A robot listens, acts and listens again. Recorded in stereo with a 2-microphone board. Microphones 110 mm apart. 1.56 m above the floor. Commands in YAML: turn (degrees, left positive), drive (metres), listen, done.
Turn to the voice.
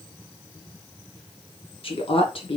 turn: 55
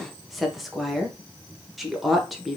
done: "Found it: a woman speaking, straight ahead."